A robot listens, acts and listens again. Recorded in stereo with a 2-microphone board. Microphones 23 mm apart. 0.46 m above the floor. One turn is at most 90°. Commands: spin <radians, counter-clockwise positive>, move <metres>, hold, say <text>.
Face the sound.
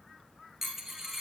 spin -0.52
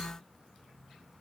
hold
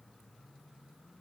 say I heard a dropped coin, but can't make it out now. It was about 15° left or 135° right.